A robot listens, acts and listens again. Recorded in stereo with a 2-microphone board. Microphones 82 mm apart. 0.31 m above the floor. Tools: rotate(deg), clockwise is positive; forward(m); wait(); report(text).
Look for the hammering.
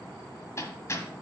rotate(-35)
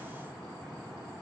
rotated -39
wait()
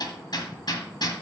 rotate(-100)
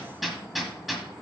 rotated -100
report("Facing the hammering.")